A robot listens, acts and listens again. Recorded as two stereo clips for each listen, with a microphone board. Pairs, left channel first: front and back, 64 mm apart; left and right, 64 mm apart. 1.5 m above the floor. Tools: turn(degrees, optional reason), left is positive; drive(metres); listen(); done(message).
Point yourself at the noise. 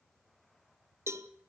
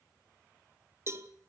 turn(degrees=-135, reason="The cowbell: 135° right.")
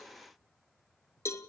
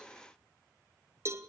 turn(degrees=-45, reason="The cowbell is now 45° right.")
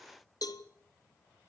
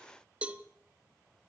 turn(degrees=-20, reason="The cowbell is now 20° right.")
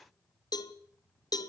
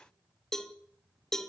turn(degrees=10, reason="The cowbell is now 10° left.")
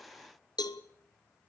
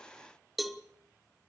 done("Facing the cowbell.")